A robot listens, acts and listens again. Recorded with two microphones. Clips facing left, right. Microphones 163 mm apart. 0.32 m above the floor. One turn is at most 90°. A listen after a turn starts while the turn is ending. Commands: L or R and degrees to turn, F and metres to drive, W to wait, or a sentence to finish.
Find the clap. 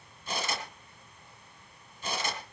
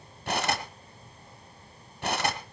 W
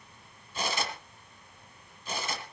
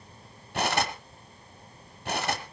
W
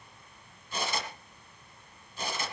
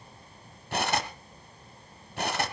I can't make out a clap, only cutlery clinking.